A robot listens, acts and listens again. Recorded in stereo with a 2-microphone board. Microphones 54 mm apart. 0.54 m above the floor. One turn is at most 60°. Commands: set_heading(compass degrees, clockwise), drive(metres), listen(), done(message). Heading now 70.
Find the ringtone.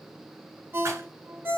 set_heading(120)
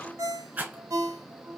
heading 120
set_heading(180)
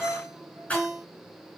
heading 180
set_heading(195)
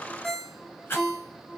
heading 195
done("Facing the ringtone, under 1 m away.")